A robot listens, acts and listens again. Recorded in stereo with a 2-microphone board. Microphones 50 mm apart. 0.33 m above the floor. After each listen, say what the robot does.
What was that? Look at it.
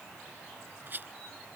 Turn 45° right.
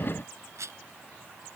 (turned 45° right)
Turn 90° right.
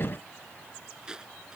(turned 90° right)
Turn 15° right.
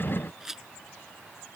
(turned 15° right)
Turn 10° right.
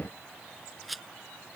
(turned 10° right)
Facing the rattle.